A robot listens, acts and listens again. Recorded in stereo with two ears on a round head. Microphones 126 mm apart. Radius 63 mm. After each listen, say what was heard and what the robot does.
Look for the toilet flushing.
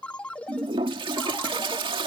The toilet flushing: about 35° right or 145° right. Turn 35° right.
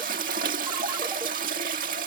So it is at 105° right. Turn 105° right.
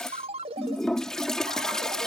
Facing the toilet flushing.